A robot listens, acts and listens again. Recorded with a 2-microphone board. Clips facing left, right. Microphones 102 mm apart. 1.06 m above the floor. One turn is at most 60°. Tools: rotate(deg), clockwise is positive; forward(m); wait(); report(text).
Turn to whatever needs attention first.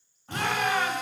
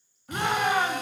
rotate(20)
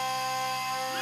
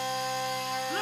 wait()
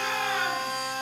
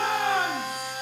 rotate(60)
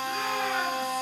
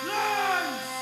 rotate(60)
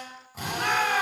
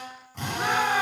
rotate(15)
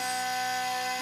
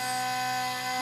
wait()
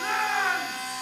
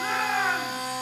report("Found it: a shout, straight ahead.")